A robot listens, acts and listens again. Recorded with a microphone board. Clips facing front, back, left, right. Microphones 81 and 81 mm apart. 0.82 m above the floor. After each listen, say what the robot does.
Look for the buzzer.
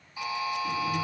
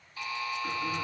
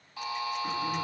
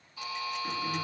Turn 75° left.
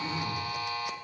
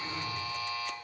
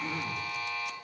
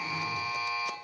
Facing the buzzer.